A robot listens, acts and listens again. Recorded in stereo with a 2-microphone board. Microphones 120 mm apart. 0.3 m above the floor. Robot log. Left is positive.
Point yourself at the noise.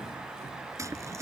note: The tearing paper: about 25° right or 155° right.
cmd yaw -25
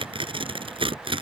note: So it is at 125° right.
cmd yaw -125
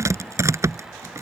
note: The tearing paper is now 25° right.
cmd yaw -25
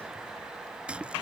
note: The tearing paper is now 10° right.
cmd yaw -10
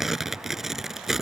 end: Found it: tearing paper, straight ahead.